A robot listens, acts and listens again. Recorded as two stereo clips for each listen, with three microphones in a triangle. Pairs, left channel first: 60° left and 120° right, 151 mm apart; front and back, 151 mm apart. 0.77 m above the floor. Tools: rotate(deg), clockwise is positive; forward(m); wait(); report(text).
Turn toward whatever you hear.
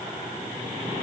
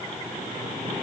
wait()
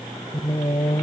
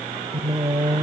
rotate(-115)
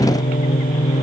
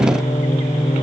rotate(-40)
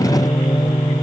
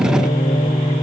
report("Facing the singing.")